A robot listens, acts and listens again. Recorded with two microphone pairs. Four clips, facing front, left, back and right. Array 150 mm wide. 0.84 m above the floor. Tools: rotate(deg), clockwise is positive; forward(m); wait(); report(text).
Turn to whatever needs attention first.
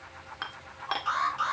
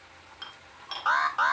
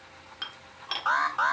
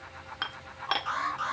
rotate(-130)
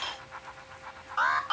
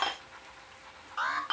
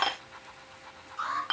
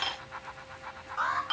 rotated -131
report("Facing the alarm.")